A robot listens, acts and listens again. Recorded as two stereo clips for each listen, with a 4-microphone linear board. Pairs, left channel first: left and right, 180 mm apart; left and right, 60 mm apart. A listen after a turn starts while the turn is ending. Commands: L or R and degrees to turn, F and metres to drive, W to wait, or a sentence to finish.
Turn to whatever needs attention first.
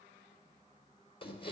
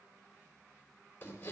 W
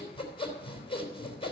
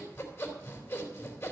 W
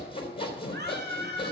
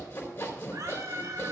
R65
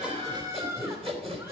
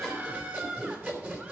R15
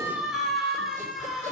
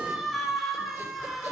Found it: a scream, straight ahead.